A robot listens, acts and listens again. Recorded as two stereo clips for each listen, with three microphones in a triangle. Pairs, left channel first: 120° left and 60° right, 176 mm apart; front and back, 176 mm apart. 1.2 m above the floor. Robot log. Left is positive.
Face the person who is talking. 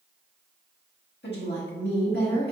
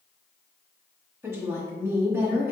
note: The woman speaking: 105° left.
cmd yaw +105
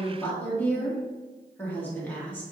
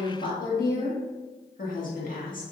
note: The woman speaking is now 40° left.
cmd yaw +40
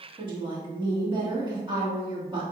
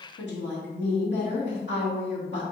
end: Found it: a woman speaking, straight ahead.